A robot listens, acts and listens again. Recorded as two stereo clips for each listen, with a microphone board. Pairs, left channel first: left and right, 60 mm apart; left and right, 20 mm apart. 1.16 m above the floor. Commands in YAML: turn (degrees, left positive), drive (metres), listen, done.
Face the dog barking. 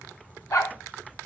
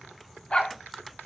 turn: 90
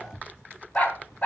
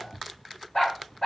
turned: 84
turn: 25
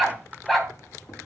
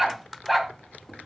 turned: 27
done: "Found it: a dog barking, straight ahead, 2 to 4 m away."